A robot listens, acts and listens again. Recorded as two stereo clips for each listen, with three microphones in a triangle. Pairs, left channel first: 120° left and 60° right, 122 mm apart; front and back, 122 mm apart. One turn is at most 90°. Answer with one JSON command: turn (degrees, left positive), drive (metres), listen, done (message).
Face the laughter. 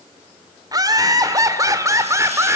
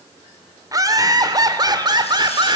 {"turn": -90}
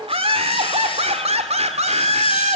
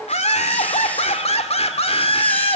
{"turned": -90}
{"turn": -35}
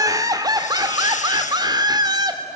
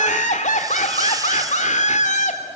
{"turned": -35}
{"done": "Found it: laughter, straight ahead, 2 to 4 m away."}